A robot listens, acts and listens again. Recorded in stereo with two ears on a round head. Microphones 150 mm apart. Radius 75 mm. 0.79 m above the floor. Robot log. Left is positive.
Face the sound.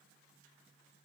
cmd idle
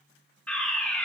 cmd yaw +30
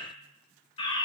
note: So it is at 145° left.
cmd yaw +145
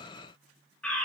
note: The fire alarm is now 10° left.
cmd yaw +10
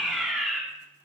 end: Found it: a fire alarm, straight ahead, 2 to 4 m away.